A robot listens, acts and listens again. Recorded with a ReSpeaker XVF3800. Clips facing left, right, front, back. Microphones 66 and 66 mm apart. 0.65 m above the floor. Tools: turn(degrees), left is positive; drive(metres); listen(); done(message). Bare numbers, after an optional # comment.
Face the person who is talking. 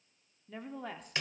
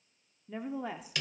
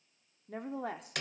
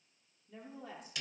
# The woman speaking: 10° right.
turn(-10)
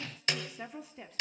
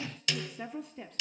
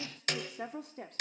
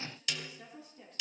done("Found it: a woman speaking, straight ahead, 1 to 2 m away.")